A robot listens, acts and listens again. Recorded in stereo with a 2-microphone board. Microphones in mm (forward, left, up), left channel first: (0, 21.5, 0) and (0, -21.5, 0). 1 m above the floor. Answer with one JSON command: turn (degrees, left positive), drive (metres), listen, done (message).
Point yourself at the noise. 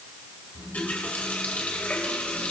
{"turn": 35}
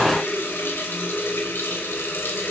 {"turn": 115}
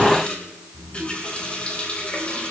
{"turn": 30}
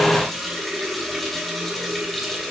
{"done": "Found it: a running tap, straight ahead, 2 to 4 m away."}